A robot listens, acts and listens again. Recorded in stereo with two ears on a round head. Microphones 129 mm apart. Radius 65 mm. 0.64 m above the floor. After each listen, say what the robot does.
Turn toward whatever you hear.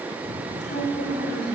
Turn 90° left.
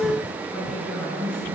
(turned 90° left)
Facing the woman speaking, over 4 m away.